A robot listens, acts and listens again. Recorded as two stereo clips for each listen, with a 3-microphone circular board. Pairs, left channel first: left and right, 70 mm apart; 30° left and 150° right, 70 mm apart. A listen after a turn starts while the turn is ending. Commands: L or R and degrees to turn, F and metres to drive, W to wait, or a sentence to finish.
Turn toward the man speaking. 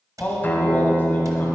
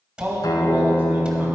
L150
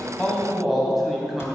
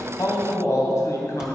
Facing the man speaking, 2 to 4 m away.